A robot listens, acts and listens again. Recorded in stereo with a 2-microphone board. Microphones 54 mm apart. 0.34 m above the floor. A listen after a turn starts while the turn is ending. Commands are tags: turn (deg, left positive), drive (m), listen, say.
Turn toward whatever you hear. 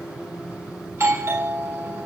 <turn deg="-55"/>
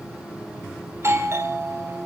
<turn deg="-60"/>
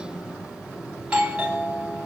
<turn deg="-20"/>
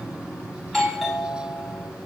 <say>Facing the doorbell, 2 to 4 m away.</say>